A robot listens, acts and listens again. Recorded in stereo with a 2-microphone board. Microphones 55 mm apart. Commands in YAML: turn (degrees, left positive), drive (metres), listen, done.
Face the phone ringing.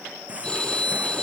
turn: 30
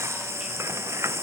listen: true
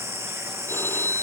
turn: 135
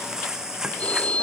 turn: 25
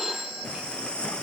done: "Found it: a phone ringing, straight ahead."